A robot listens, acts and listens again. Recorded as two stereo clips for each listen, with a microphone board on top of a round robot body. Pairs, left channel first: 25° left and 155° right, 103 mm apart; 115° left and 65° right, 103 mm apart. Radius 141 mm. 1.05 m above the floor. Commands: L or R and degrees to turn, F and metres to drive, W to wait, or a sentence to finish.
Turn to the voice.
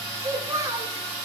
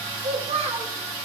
R95
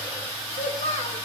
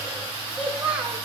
L10
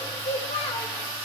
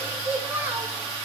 Found it: a child speaking, straight ahead.